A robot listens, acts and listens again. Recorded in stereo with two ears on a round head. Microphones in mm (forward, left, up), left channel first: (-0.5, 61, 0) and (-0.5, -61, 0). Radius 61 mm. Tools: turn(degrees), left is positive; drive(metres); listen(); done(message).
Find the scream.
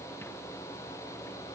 listen()
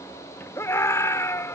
turn(degrees=20)
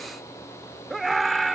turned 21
done("Facing the scream.")